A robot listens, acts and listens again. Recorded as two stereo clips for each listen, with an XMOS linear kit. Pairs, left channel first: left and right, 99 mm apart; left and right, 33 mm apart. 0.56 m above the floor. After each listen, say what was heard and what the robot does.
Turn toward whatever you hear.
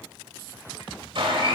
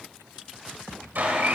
The blender: about 65° right or 115° right. Turn 65° right.
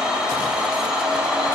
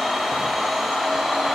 So it is at 10° right. Turn 10° right.
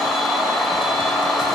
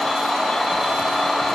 Found it: a blender, straight ahead, 2 to 4 m away.